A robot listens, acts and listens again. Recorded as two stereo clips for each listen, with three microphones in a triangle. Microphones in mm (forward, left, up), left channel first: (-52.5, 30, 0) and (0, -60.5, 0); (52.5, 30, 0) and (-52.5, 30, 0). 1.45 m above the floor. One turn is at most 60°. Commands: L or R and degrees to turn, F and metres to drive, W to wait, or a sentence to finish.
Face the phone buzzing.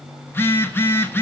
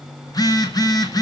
L55
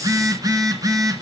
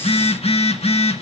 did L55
Found it: a phone buzzing, straight ahead, 1 to 2 m away.